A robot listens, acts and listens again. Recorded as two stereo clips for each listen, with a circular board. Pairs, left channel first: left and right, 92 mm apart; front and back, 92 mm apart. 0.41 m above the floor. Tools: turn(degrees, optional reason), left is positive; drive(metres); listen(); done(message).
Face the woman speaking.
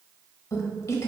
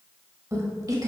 turn(degrees=140, reason="The woman speaking: 140° left.")
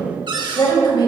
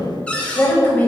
turn(degrees=70, reason="The woman speaking is now 70° left.")
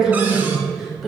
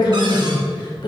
done("Found it: a woman speaking, straight ahead, 1 to 2 m away.")